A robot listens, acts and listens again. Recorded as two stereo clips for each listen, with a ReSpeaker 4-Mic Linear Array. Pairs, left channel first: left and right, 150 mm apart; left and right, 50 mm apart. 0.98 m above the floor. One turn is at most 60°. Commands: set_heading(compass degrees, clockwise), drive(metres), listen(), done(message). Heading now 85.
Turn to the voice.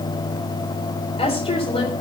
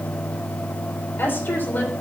set_heading(45)
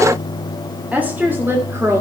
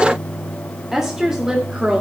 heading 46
set_heading(66)
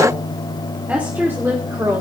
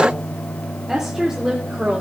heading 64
set_heading(89)
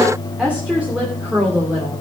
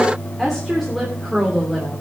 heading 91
set_heading(101)
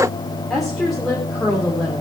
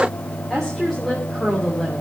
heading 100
done("Facing the woman speaking, 2 to 4 m away.")